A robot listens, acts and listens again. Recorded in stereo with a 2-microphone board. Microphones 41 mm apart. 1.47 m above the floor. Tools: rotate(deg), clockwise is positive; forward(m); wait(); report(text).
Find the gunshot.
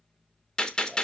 rotate(-20)
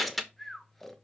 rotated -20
report("Facing the gunshot, 1 to 2 m away.")